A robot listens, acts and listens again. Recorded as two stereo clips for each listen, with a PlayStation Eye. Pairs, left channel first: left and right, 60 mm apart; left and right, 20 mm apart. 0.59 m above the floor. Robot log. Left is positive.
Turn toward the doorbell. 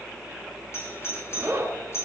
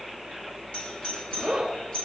note: The doorbell: about 50° left or 130° left.
cmd yaw +50
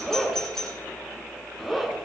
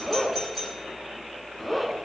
note: So it is at 10° left.
cmd yaw +10
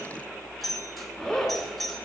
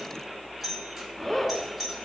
end: Facing the doorbell, 2 to 4 m away.